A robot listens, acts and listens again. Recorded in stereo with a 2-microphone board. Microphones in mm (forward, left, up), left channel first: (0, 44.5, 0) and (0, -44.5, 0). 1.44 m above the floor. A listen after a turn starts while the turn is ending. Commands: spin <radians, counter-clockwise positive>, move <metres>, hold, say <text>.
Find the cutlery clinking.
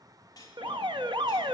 spin 0.79
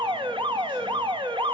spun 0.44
hold
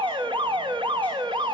hold
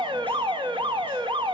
say I heard cutlery clinking, but can't make it out now. It was about 20° left or 110° left.